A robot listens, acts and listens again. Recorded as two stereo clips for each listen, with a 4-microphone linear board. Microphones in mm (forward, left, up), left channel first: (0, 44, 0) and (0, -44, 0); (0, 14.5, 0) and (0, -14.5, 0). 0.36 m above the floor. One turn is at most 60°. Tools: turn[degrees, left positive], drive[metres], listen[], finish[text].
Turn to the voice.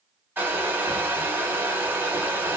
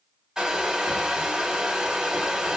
Action: listen[]
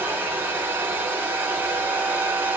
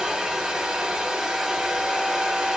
Action: listen[]
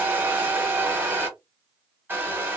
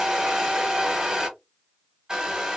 Action: finish[I can't make out anyone speaking to turn to.]